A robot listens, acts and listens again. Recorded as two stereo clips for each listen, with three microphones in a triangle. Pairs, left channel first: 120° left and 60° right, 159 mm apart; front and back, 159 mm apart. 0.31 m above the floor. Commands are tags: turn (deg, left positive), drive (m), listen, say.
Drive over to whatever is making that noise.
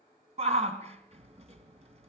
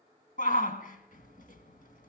<turn deg="-20"/>
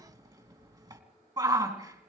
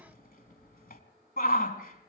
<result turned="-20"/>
<drive m="1.0"/>
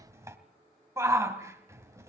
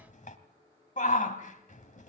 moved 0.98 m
<turn deg="10"/>
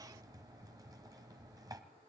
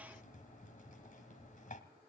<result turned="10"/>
<listen/>
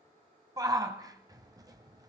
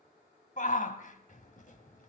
<drive m="1.0"/>
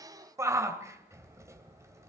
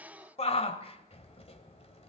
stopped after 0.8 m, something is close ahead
<say>Arrived at the shout, straight ahead.</say>